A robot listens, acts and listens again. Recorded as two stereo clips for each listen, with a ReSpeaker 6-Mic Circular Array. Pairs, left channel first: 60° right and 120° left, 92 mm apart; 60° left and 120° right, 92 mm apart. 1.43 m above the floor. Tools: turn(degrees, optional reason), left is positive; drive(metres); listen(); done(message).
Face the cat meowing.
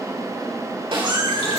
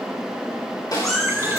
turn(degrees=145, reason="The cat meowing: 145° left.")
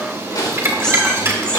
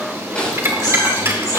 turn(degrees=20, reason="The cat meowing is now 20° left.")
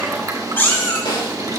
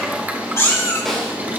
done("Found it: a cat meowing, straight ahead, 2 to 4 m away.")